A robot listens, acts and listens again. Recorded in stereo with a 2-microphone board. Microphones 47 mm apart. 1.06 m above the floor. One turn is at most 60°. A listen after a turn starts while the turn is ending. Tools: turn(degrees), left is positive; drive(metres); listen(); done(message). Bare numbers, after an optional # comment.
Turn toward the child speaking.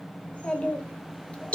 # The child speaking: about 25° left or 155° left.
turn(25)
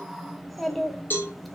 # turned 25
done("Found it: a child speaking, straight ahead, 1 to 2 m away.")